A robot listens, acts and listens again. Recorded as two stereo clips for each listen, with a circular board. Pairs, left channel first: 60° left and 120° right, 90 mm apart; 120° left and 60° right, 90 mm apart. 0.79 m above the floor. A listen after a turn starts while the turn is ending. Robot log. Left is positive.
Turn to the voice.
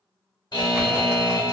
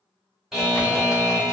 cmd idle
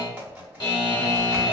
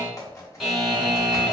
cmd idle
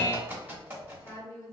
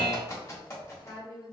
note: The woman speaking: 115° left.
cmd yaw +115
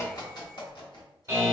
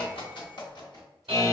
cmd idle
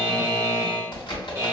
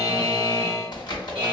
cmd idle
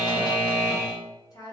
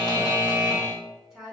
note: The woman speaking is now 30° left.
cmd yaw +30
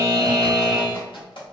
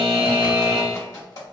cmd idle
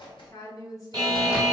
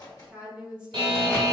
note: The woman speaking is now 15° left.
cmd yaw +15
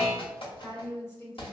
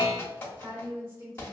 end: Facing the woman speaking, 1 to 2 m away.